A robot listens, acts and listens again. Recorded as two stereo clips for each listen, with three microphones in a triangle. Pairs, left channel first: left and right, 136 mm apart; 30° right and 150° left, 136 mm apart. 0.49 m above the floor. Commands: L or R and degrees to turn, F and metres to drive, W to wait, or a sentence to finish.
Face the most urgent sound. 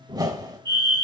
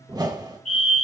R35
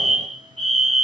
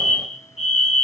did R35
Facing the fire alarm, over 4 m away.